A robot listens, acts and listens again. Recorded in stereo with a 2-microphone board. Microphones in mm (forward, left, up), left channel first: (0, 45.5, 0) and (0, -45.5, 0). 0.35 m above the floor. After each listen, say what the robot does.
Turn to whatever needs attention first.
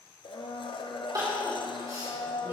Turn 45° right.
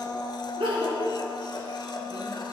Turn 90° right.
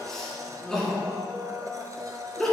Facing the crying, 2 to 4 m away.